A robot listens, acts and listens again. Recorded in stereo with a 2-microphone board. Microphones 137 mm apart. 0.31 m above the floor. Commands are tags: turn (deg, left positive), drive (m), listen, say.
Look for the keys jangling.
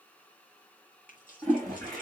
<turn deg="70"/>
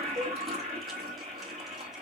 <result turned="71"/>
<listen/>
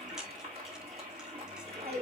<listen/>
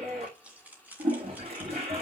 <turn deg="-10"/>
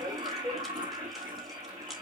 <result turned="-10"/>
<listen/>
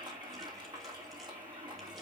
<listen/>
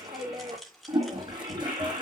<say>Facing the keys jangling, 2 to 4 m away.</say>